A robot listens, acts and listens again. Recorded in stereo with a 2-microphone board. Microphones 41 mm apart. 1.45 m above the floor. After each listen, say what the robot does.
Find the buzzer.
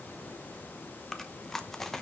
Keep listening.
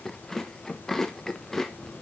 Keep listening.
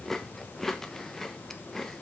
I can't make out a buzzer, only chewing.